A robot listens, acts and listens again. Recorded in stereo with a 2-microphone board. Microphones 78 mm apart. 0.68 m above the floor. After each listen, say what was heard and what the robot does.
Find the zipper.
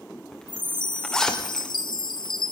Turn 30° left.
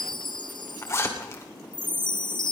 So it is at 140° left. Turn 140° left.
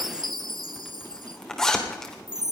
Facing the zipper, 2 to 4 m away.